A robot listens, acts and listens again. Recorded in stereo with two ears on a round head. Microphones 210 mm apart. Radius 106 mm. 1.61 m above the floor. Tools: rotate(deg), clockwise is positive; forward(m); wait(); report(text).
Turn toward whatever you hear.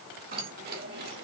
rotate(45)
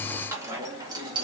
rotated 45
rotate(20)
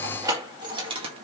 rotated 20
rotate(25)
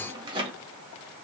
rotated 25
rotate(25)
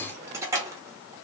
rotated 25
rotate(15)
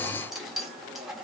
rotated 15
report("Facing the keys jangling.")